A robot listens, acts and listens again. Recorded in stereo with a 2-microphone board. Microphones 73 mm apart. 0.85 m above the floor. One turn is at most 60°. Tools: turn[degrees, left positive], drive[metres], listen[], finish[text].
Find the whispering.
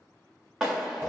Action: listen[]
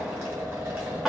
Action: listen[]
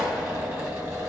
Action: finish[I can't make out whispering to turn to.]